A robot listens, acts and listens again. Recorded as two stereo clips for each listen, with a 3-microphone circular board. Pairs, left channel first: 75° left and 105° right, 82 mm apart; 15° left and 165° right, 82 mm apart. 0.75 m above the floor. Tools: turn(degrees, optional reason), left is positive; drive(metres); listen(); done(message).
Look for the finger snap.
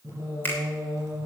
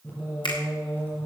turn(degrees=10, reason="The finger snap: 10° left.")
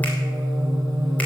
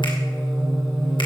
listen()
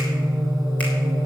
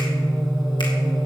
listen()
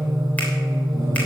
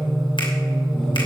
done("Facing where the finger snap came from. I can't hear it now.")